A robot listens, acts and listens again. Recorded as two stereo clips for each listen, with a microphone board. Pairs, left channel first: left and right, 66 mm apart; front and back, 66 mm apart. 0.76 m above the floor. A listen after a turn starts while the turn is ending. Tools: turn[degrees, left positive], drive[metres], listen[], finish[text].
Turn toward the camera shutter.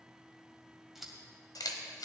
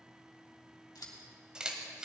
Thought: The camera shutter: 105° left.
Action: turn[105]
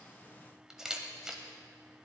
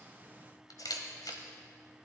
Thought: The camera shutter is now 10° right.
Action: turn[-10]
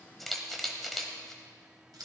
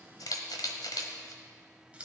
Action: finish[Facing the camera shutter.]